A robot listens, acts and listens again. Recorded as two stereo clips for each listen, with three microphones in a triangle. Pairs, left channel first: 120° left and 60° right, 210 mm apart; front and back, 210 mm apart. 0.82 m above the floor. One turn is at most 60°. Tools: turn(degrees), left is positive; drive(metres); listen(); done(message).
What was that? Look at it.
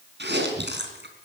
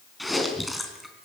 turn(degrees=-60)
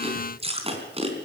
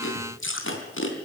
done("Facing the chewing, 2 to 4 m away.")